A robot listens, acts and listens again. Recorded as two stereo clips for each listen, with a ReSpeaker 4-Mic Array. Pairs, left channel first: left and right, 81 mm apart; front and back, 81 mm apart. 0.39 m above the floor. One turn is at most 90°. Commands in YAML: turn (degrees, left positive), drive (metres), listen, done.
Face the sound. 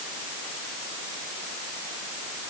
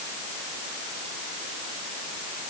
listen: true
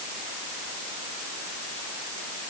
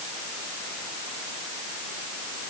listen: true
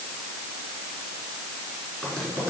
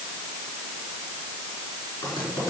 turn: 10
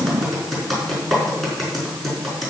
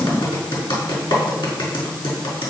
done: "Found it: typing on a keyboard, straight ahead."